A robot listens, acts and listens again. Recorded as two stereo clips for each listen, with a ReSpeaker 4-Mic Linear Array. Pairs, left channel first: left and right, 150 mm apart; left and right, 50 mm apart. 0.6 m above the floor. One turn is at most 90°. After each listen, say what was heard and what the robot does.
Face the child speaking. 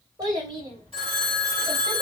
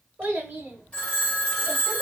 The child speaking: about 35° right or 145° right. Turn 35° right.
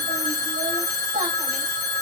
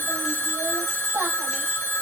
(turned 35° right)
So it is at 100° right. Turn 90° right.
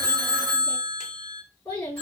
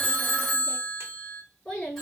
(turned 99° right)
The child speaking is now 15° left. Turn 15° left.
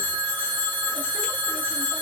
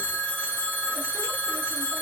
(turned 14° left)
Keep listening.
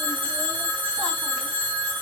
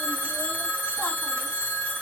Keep listening.
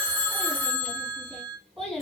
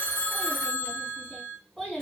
Found it: a child speaking, straight ahead, 2 to 4 m away.